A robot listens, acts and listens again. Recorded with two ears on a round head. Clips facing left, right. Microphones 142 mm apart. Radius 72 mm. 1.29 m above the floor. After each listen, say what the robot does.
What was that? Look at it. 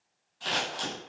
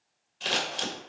Turn 25° right.
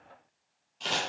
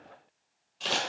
Facing the scissors.